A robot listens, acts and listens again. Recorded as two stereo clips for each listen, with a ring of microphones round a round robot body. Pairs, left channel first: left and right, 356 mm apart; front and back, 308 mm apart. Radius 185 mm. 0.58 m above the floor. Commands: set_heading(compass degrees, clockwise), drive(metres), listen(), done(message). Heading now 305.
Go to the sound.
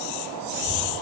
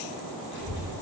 set_heading(340)
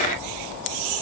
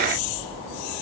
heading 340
drive(1.0)
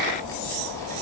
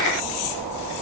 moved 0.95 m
set_heading(330)
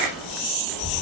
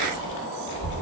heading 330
drive(1.0)
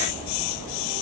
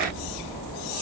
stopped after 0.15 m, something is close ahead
set_heading(340)
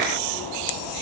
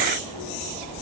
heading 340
done("I am next to the child speaking.")